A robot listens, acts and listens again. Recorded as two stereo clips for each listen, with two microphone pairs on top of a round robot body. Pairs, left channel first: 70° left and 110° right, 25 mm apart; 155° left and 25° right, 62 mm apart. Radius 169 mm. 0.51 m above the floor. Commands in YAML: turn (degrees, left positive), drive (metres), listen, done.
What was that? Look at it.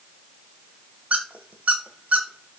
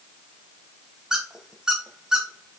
turn: -105
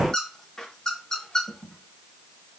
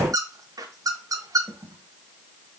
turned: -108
done: "Found it: a squeak, straight ahead."